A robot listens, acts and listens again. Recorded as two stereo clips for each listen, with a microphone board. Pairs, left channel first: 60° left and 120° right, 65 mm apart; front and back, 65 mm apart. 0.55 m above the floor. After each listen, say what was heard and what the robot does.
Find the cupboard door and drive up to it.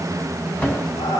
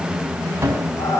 The cupboard door: 125° left. Turn 125° left.
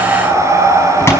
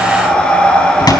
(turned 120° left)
Drive 1.0 m forward.
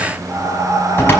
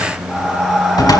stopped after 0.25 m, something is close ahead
Something is in my way. I am facing the cupboard door but have not reached it.